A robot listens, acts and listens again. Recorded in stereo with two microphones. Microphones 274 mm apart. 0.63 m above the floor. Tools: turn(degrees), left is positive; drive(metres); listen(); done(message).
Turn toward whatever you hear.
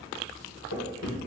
turn(degrees=70)
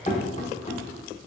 turn(degrees=25)
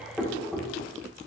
done("Facing the knocking, under 1 m away.")